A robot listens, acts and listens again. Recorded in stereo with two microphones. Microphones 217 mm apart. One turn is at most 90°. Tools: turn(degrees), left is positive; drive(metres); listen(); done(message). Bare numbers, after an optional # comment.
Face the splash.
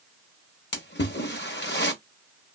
# The splash: about 55° left or 125° left.
turn(55)
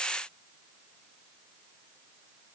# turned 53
listen()
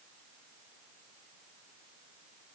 done("I heard a splash, but can't make it out now. It was about straight ahead or 75° left.")